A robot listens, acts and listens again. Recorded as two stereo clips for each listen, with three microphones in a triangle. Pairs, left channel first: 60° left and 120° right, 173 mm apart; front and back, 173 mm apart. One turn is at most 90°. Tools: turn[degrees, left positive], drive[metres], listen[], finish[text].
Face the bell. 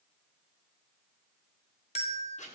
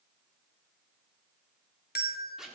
Thought: The bell: 10° left.
Action: turn[10]
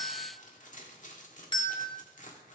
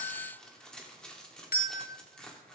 Action: finish[Facing the bell.]